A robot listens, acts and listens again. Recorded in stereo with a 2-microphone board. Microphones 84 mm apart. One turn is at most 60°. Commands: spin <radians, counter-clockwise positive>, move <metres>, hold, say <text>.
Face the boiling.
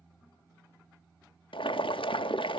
spin 1.05
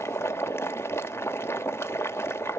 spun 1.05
spin 0.52
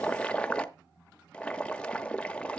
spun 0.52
spin 0.17
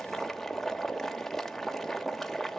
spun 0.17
say Facing the boiling, under 1 m away.